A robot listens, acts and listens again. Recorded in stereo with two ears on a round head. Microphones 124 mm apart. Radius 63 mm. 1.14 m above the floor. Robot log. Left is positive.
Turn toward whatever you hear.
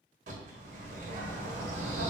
note: The bird: about 60° right or 120° right.
cmd yaw -60
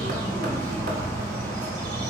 note: So it is at 60° right.
cmd yaw -60
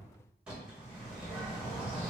end: Facing the bird.